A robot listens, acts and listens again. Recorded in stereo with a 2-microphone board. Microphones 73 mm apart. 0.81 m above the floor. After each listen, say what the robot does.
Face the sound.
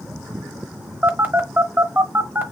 Turn 30° right.
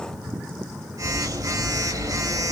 Turn 120° right.
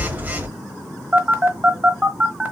Turn 25° right.
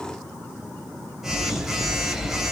Facing the phone buzzing, 1 to 2 m away.